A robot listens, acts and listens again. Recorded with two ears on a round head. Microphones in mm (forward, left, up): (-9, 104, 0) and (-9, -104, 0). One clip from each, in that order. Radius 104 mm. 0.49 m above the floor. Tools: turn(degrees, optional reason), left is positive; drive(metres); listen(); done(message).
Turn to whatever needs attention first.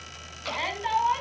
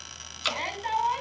turn(degrees=30)
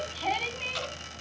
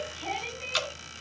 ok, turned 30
turn(degrees=140, reason="So it is at 140° left.")
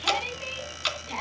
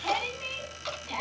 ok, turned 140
done("Found it: a shout, straight ahead.")